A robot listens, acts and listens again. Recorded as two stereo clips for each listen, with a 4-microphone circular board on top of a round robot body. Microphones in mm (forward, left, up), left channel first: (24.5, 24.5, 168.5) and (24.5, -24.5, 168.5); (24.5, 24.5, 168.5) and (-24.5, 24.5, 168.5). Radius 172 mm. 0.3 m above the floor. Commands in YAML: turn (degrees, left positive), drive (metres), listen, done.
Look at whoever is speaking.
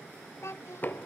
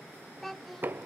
turn: 85
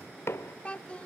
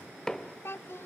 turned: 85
turn: 25
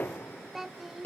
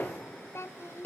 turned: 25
done: "Found it: a child speaking, straight ahead."